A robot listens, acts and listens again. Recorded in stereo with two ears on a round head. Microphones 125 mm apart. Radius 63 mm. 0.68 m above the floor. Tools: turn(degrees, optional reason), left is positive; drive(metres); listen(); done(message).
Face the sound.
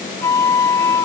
turn(degrees=20, reason="The flute: about 20° left or 160° left.")
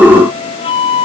turn(degrees=140, reason="So it is at 140° left.")
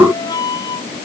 turn(degrees=25, reason="The flute is now 25° left.")
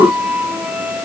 turn(degrees=-10, reason="The flute is now 10° right.")
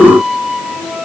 done("Facing the flute.")